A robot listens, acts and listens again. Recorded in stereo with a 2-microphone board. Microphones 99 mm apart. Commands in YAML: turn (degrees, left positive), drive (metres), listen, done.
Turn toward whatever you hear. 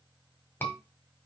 turn: 20
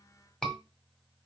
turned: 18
done: "Found it: a scream, straight ahead, 1 to 2 m away."